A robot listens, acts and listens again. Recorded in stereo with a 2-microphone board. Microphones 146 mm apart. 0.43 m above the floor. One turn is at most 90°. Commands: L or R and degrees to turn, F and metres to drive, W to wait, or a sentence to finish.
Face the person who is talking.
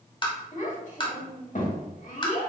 L65
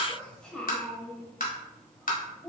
Found it: a child speaking, straight ahead.